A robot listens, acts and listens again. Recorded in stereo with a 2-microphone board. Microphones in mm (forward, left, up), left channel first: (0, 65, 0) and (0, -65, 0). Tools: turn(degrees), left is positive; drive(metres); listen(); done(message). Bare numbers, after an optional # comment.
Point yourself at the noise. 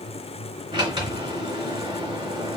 # The sliding door: about 40° right or 140° right.
turn(-40)
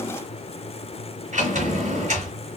# So it is at 95° right.
turn(-95)
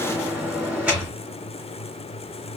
# The sliding door is now 10° right.
turn(-10)
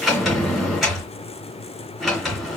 done("Facing the sliding door.")